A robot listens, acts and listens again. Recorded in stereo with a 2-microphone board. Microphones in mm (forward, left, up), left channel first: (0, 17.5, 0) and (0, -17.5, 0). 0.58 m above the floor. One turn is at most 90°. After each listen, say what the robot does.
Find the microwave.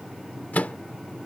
Turn 55° left.
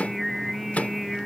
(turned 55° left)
Turn 60° left.
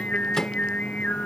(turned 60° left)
Keep listening.
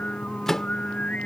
Turn 15° left.
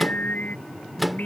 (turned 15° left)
Facing the microwave.